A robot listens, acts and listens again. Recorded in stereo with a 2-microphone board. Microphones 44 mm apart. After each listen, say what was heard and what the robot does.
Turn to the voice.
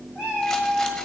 Keep listening.
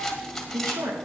Turn 90° right.
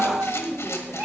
So it is at 20° left. Turn 20° left.
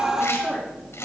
Keep listening.
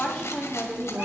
The woman speaking is now 10° left. Turn 10° left.
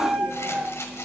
Keep listening.
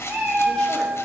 Keep listening.
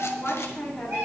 The woman speaking is now 10° left. Turn 10° left.
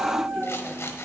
Keep listening.
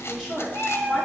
Facing the woman speaking, over 4 m away.